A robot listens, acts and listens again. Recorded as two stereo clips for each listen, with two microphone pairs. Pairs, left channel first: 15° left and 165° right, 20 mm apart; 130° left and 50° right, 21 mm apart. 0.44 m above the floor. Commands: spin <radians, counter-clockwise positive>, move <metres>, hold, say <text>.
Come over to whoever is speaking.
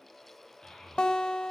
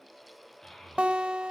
spin 1.13
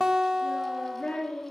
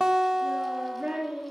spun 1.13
spin -0.26
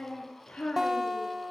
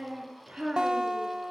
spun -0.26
move 1.0
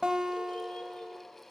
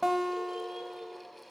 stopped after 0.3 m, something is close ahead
hold
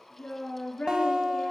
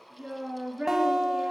spin -0.17
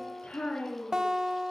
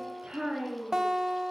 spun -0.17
say Blocked. The child speaking is further on, straight ahead.